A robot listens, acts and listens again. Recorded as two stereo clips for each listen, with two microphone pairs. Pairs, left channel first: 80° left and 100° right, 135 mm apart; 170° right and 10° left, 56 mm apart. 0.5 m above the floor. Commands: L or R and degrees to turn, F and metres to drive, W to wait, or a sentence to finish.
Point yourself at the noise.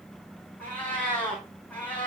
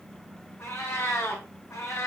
L160
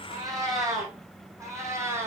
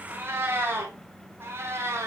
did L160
R30
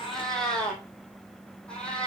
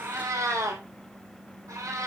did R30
Facing the cat meowing, 2 to 4 m away.